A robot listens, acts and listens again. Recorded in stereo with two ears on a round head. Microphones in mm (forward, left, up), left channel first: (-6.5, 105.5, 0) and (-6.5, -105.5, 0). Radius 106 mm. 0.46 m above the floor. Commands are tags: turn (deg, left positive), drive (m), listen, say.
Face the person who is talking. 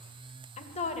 <turn deg="30"/>
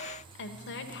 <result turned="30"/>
<turn deg="115"/>
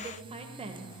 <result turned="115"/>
<turn deg="-30"/>
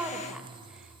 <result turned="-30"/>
<say>Facing the woman speaking, 1 to 2 m away.</say>